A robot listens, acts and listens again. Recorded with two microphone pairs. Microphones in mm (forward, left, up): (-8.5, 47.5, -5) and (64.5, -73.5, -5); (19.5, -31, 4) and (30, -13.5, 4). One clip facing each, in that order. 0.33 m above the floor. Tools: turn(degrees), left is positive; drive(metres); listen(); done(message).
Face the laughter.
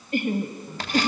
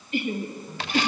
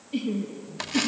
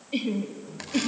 turn(degrees=85)
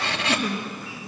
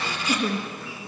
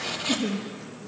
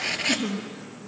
turn(degrees=10)
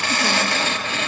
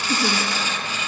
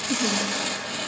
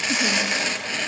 listen()
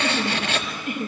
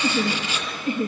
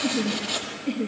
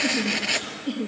done("Facing the laughter, 2 to 4 m away.")